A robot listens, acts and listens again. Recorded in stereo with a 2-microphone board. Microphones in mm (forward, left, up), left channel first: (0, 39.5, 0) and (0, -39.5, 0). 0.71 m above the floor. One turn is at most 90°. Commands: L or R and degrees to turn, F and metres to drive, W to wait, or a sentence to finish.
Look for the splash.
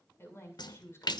L70
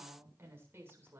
W
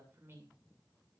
I heard a splash, but can't make it out now. It was about straight ahead or 40° left.